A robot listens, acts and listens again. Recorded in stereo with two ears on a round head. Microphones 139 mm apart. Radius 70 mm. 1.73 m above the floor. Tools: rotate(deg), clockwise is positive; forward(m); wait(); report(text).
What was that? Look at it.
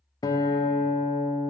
rotate(-25)
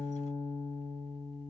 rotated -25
report("Found it: a guitar, straight ahead.")